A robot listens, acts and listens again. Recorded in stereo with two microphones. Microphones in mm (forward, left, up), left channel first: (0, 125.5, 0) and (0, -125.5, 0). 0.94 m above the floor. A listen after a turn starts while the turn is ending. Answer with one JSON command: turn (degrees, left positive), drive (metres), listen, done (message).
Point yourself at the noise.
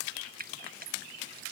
{"turn": -35}
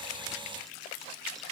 {"listen": true}
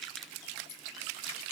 {"listen": true}
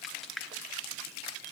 {"done": "Facing the frying."}